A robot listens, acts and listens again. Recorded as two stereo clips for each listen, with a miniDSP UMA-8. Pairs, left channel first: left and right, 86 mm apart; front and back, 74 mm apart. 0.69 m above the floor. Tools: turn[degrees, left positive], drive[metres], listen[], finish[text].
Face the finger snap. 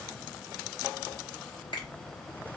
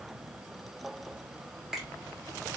Thought: The finger snap: 95° left.
Action: turn[95]
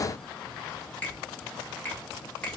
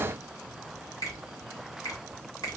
Thought: The finger snap is now 20° left.
Action: turn[20]
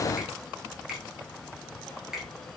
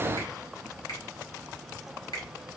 Action: finish[Found it: a finger snap, straight ahead, 1 to 2 m away.]